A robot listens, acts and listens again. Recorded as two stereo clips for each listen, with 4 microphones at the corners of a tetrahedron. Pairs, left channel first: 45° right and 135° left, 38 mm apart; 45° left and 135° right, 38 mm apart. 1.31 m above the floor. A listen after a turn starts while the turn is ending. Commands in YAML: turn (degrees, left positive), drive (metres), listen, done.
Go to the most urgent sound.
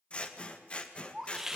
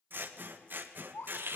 turn: 50
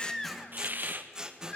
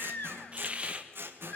drive: 1.0
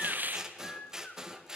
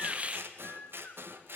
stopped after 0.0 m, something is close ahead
done: "Something is in my way. I am facing the baby crying but have not reached it."